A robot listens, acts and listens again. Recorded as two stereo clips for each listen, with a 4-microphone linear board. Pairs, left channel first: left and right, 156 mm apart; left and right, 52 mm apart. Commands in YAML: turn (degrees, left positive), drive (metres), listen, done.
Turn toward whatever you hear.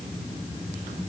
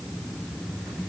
listen: true
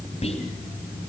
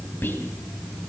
turn: 40
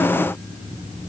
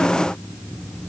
listen: true
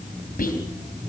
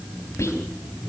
turn: 95
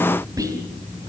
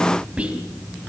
turn: -25
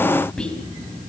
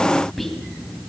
done: "Facing the whispering."